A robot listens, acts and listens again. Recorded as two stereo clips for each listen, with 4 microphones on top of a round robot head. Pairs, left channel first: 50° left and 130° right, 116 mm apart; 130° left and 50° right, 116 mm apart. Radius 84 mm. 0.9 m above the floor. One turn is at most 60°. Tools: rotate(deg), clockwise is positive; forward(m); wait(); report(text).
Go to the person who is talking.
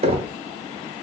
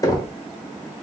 wait()
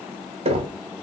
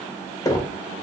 wait()
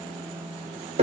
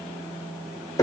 report("I can't make out anyone speaking, only knocking.")